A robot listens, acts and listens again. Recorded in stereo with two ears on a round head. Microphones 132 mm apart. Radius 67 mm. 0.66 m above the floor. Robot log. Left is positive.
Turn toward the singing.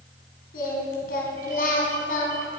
note: The singing: about 65° left or 115° left.
cmd yaw +65
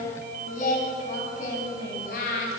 note: So it is at 65° left.
cmd yaw +65
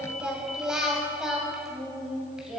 end: Found it: singing, straight ahead.